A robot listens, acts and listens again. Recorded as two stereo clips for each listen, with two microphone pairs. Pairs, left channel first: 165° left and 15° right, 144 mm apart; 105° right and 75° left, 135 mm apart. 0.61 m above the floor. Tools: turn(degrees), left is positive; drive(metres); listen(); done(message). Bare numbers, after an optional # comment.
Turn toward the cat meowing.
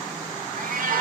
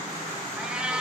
done("Facing the cat meowing, 1 to 2 m away.")